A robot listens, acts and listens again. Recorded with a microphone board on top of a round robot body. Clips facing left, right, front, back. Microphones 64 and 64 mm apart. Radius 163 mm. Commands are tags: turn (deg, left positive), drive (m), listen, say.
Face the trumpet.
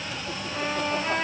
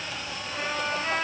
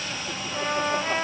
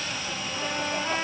<turn deg="10"/>
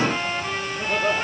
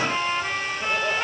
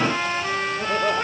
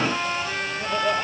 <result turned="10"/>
<say>Found it: a trumpet, straight ahead, over 4 m away.</say>